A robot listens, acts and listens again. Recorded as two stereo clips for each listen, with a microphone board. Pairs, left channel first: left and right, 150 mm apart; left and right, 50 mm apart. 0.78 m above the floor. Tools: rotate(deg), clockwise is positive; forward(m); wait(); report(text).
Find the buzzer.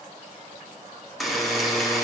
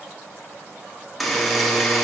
rotate(-30)
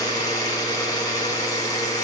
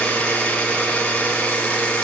rotate(-150)
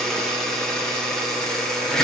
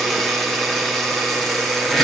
report("Facing the buzzer, 1 to 2 m away.")